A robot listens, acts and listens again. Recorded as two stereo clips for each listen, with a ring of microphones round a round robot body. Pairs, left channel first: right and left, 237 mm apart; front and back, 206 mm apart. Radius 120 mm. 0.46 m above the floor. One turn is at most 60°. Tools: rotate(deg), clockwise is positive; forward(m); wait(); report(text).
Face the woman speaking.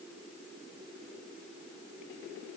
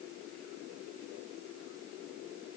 wait()
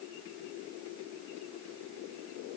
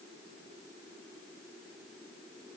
wait()
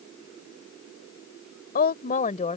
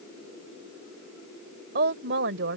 rotate(60)
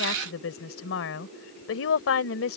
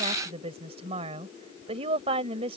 rotate(60)
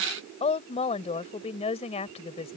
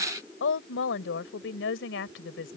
rotate(25)
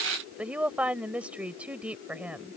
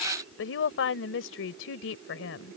report("Facing the woman speaking.")